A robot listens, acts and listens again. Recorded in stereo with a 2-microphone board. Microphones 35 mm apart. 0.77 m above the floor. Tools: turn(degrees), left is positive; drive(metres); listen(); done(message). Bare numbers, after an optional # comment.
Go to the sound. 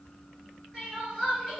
turn(30)
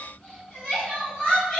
# So it is at 155° left.
turn(155)
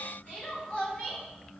# The crying is now 60° left.
turn(60)
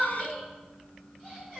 drive(1.0)
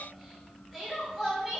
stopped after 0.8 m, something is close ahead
done("I am next to the crying.")